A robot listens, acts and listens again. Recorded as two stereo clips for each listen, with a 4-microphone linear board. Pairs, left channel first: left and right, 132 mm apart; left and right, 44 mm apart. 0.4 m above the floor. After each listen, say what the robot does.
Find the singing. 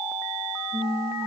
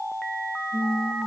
Turn 55° right.
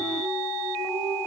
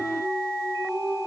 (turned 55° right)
Turn 70° right.
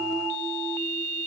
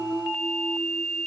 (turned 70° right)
Keep listening.
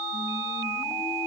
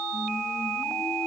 Keep listening.
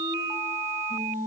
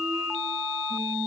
Turn 10° right.
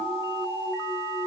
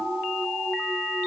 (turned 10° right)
Keep listening.
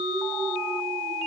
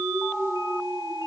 Facing the singing.